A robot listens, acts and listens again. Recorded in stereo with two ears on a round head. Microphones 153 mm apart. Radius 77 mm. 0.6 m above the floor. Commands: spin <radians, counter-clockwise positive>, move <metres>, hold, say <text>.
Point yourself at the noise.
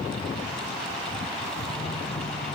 hold
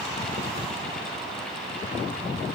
hold
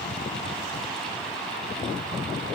say I can't make out anything.